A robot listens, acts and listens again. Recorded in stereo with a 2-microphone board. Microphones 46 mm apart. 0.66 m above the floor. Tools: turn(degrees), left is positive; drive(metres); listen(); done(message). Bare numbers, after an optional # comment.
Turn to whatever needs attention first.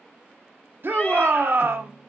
# The shout: about 55° right or 125° right.
turn(-55)
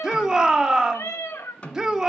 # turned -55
# So it is at 20° right.
turn(-20)
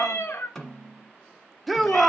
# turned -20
done("Facing the shout.")